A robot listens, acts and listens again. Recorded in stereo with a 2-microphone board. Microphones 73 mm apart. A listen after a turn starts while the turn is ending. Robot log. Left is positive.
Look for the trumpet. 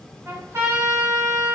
note: The trumpet: about 35° right or 145° right.
cmd yaw -35
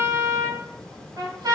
note: So it is at 105° right.
cmd yaw -105
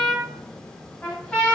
note: The trumpet is now 15° left.
cmd yaw +15
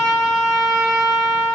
end: Found it: a trumpet, straight ahead.